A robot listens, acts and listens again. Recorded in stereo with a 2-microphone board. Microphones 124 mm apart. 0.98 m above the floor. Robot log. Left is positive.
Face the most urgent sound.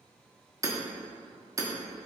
cmd idle
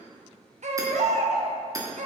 note: The baby crying: about 70° right or 110° right.
cmd yaw -70
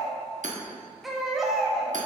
end: Found it: a baby crying, straight ahead, 1 to 2 m away.